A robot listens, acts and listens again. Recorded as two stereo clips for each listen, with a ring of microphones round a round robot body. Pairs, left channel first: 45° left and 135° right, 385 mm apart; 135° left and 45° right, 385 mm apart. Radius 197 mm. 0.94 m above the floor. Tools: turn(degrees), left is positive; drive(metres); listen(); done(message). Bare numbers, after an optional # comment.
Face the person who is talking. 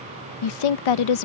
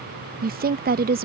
# The woman speaking: 20° left.
turn(20)
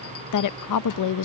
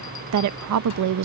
done("Facing the woman speaking.")